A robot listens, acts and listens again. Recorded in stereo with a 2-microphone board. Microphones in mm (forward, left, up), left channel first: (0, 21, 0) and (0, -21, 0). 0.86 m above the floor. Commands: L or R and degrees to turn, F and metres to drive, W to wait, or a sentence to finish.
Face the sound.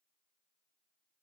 W
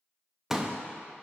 R30
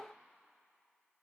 W
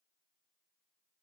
I heard a pop, but can't make it out now. It was about 20° left or 140° right.